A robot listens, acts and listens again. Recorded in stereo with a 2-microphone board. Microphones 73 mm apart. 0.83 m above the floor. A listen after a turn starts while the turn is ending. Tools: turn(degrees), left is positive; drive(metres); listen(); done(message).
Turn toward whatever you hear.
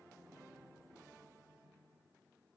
listen()
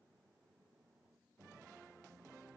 listen()
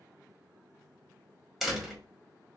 turn(degrees=30)
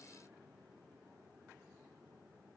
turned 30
listen()
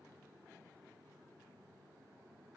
done("I heard a door slam, but can't make it out now. It was about 30° right or 150° left.")